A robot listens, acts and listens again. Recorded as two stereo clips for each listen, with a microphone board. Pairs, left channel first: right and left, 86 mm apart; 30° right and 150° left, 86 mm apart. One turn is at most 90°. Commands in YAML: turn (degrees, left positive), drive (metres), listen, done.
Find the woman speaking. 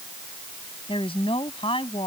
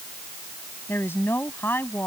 turn: -90
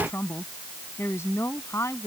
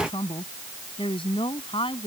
turn: -30
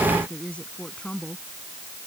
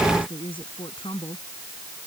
turn: -15
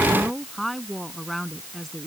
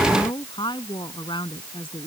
done: "Found it: a woman speaking, straight ahead."